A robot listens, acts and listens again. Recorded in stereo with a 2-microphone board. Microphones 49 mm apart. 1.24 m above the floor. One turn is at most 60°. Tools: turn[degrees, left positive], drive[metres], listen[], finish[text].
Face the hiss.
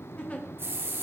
Thought: The hiss: about 50° right or 130° right.
Action: turn[-50]
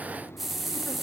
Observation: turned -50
Action: finish[Found it: a hiss, straight ahead, under 1 m away.]